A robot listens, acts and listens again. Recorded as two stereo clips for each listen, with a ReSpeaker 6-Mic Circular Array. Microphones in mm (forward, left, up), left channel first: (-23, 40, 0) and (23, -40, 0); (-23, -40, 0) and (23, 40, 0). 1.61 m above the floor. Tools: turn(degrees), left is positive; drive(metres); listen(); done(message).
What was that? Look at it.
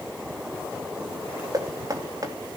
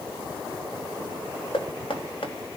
turn(degrees=-110)
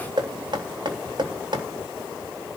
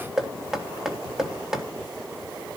turn(degrees=-25)
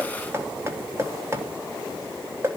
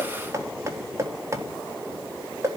done("Facing the knocking, 2 to 4 m away.")